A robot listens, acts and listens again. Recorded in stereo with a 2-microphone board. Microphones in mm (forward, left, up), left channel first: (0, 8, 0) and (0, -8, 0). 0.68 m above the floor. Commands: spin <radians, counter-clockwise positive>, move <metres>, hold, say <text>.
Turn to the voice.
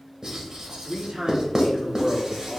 spin -1.05
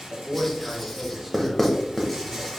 spin -0.52
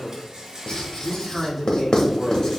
say Facing the man speaking.